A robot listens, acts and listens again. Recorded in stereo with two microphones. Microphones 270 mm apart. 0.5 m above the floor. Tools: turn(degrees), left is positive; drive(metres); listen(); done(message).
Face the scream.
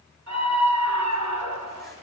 turn(degrees=-90)
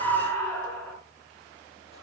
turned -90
done("Facing the scream.")